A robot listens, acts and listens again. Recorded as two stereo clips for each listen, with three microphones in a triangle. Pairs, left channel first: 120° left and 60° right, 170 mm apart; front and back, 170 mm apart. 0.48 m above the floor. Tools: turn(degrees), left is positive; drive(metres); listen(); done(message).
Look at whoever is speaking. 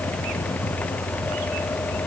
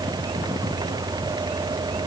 listen()
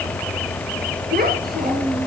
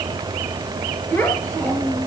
turn(degrees=-70)
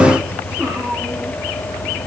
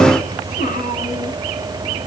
turn(degrees=15)
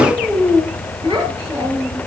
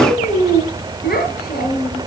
done("Found it: a child speaking, straight ahead.")